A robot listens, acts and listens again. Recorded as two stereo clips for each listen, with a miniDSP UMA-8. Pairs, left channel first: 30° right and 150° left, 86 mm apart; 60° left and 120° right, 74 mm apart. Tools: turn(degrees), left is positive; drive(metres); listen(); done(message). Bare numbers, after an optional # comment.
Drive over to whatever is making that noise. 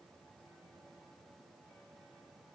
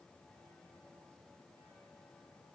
listen()
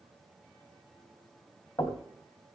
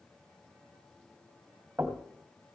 # The knocking: 55° right.
turn(-55)
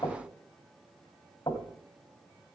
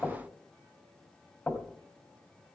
drive(1.0)
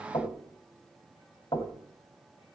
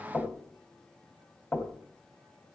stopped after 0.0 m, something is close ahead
done("Blocked. The knocking is further on, straight ahead.")